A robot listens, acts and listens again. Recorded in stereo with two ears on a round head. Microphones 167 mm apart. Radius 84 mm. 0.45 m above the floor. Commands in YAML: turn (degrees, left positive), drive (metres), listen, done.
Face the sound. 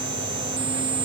listen: true
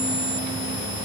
listen: true
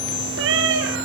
turn: -70
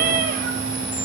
turn: -45
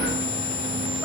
listen: true
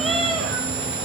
done: "Found it: a cat meowing, straight ahead."